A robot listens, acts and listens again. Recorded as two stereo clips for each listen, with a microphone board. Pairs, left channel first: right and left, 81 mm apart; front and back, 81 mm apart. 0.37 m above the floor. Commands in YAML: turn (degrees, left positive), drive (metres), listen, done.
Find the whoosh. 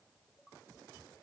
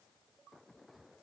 listen: true
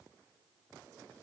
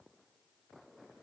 listen: true
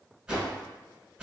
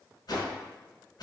turn: 15
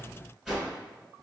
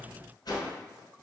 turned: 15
turn: 10
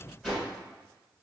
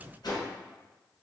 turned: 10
done: "Facing the whoosh."